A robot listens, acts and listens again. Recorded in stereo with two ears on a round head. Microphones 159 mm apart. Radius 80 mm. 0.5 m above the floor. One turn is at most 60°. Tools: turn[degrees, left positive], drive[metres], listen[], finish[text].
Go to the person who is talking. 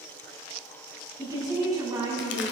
Thought: The woman speaking: about 20° right or 160° right.
Action: turn[-20]
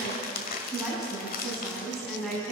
Action: drive[1.0]
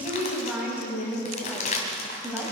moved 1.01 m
Thought: The woman speaking is now 10° right.
Action: turn[-10]
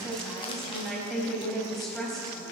Action: drive[1.0]
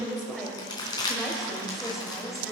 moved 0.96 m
Action: drive[1.0]
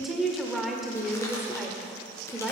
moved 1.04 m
Action: drive[1.0]
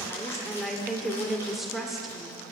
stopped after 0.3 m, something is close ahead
Action: finish[Arrived at the woman speaking, straight ahead.]